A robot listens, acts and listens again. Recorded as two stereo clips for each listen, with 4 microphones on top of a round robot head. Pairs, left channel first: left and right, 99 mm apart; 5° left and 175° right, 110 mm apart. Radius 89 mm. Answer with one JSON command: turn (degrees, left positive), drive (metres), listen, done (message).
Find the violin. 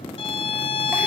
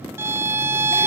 {"turn": 115}
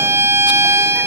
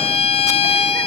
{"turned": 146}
{"turn": -30}
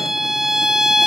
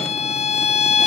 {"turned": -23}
{"done": "Facing the violin."}